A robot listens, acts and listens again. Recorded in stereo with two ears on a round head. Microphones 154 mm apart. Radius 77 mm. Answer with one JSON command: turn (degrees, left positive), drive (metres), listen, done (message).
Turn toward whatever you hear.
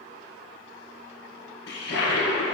{"turn": 70}
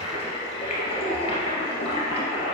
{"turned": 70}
{"turn": 35}
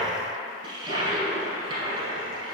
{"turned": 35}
{"turn": -25}
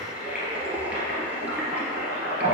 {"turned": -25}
{"turn": -10}
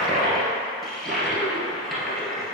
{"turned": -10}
{"done": "Facing the toilet flushing."}